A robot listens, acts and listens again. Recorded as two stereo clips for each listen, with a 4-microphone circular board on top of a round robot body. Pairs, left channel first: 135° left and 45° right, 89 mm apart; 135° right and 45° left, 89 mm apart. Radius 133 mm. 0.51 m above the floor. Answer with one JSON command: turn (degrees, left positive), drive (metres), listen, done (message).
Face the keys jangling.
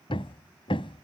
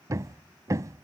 {"listen": true}
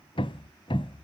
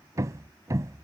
{"listen": true}
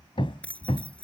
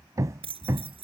{"turn": 60}
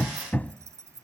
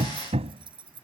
{"turn": 15}
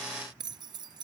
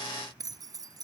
{"done": "Facing the keys jangling."}